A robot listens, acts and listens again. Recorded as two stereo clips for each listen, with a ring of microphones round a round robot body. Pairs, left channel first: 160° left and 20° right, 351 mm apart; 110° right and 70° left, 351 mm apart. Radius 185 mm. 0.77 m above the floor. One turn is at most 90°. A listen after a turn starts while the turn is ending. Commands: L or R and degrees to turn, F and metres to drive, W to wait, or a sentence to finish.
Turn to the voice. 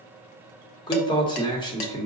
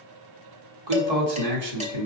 L80
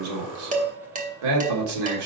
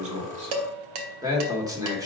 R10
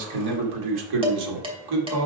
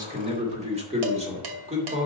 Facing the man speaking.